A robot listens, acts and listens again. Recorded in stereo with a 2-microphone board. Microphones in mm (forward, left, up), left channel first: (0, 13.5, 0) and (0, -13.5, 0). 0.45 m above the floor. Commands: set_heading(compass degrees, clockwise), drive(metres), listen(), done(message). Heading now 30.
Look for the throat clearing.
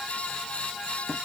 listen()
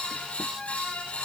listen()
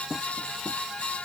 done("I can't make out throat clearing to turn to.")